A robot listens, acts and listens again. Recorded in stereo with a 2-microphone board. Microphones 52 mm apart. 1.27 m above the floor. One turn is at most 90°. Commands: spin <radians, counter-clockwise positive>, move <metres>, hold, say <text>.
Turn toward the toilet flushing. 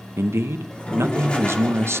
spin 0.35
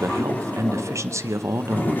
spin 1.57
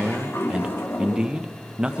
spin 0.96
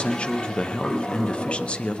spin 0.26
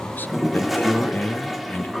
say Facing the toilet flushing, 1 to 2 m away.